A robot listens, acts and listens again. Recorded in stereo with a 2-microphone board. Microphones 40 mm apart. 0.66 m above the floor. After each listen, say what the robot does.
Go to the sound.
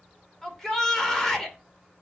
Turn 30° left.
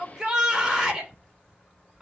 Turn 20° right.
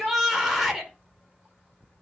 Turn 10° right.
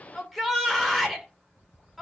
Drive 1.0 m forward.
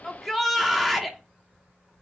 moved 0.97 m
Drive 1.0 m forward.
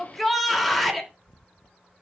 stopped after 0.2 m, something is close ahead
Arrived at the shout, straight ahead.